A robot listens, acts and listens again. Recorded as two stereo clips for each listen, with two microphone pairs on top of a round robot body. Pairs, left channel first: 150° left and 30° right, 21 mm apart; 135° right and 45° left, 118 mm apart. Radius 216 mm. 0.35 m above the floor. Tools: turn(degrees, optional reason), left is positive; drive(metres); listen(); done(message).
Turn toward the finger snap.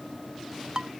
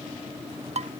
listen()
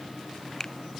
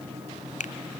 turn(degrees=-140, reason="The finger snap: 140° right.")
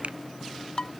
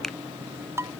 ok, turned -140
listen()
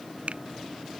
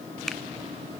turn(degrees=-50, reason="The finger snap is now 50° right.")
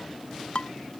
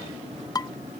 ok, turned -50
listen()
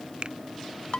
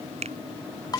turn(degrees=10, reason="The finger snap is now 10° left.")
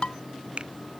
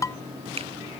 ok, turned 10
listen()
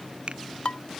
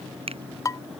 done("Found it: a finger snap, straight ahead.")